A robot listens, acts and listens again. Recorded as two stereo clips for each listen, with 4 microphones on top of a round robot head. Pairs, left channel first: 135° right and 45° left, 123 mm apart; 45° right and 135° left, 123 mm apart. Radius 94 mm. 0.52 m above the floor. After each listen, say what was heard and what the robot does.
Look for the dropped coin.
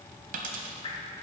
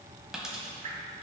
The dropped coin: 50° left. Turn 50° left.
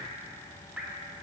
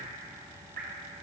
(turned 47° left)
I heard a dropped coin from this way, but can't make it out now.